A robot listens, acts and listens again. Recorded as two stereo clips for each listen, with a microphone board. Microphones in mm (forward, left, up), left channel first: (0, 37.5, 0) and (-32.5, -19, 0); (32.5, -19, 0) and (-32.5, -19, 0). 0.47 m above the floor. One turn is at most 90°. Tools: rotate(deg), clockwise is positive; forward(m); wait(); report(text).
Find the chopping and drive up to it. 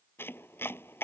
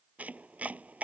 rotate(-90)
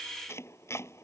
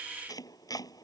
rotate(-15)
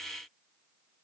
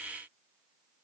wait()
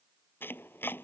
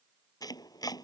forward(1.0)
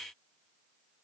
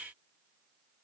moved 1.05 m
wait()
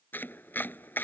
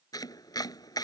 forward(1.0)
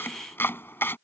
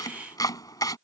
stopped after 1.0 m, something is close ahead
rotate(-10)
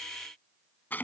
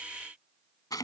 report("I am next to the chopping.")